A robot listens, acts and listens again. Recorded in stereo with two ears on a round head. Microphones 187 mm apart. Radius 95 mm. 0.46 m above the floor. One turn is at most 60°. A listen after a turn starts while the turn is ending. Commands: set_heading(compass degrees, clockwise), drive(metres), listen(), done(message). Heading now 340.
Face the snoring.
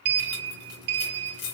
listen()
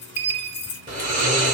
set_heading(15)
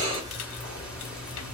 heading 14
done("Facing the snoring, 1 to 2 m away.")